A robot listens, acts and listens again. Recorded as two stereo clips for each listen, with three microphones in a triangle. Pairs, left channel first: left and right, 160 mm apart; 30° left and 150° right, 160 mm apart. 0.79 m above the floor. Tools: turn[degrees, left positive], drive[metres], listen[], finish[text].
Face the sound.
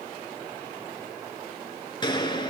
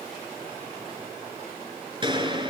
Thought: The gunshot: 150° left.
Action: turn[150]
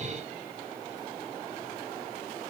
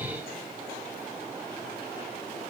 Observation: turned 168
Thought: Nothing new. It was at 15° right.
Action: turn[-15]
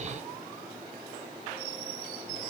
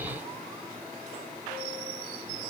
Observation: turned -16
Action: finish[Facing where the gunshot came from. I can't hear it now.]